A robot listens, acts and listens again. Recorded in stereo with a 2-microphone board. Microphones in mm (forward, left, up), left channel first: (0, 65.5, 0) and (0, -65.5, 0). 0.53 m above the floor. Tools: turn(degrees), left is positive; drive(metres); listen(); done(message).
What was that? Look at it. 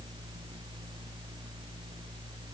listen()
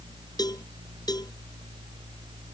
turn(degrees=30)
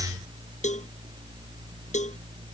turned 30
turn(degrees=120)
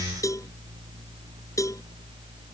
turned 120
turn(degrees=25)
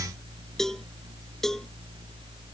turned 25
done("Facing the cowbell.")